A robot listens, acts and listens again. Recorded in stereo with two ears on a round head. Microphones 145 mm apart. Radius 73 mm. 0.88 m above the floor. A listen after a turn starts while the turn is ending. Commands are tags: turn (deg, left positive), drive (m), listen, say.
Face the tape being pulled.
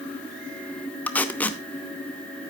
<turn deg="30"/>
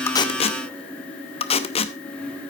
<turn deg="140"/>
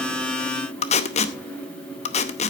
<turn deg="45"/>
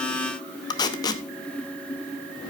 <turn deg="25"/>
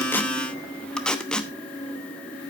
<say>Found it: tape being pulled, straight ahead.</say>